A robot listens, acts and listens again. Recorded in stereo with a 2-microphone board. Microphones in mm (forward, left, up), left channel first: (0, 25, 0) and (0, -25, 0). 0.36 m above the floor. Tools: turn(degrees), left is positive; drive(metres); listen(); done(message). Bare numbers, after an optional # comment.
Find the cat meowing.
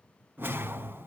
listen()
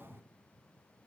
listen()
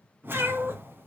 # The cat meowing: about 40° right or 140° right.
turn(-40)
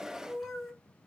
# So it is at 10° left.
turn(10)
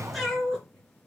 done("Facing the cat meowing, 2 to 4 m away.")